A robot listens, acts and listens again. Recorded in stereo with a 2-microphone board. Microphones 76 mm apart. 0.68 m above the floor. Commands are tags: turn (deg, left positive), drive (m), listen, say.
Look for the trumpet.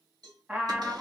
<turn deg="-30"/>
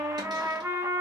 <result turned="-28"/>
<turn deg="-140"/>
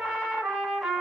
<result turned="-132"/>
<say>Facing the trumpet, under 1 m away.</say>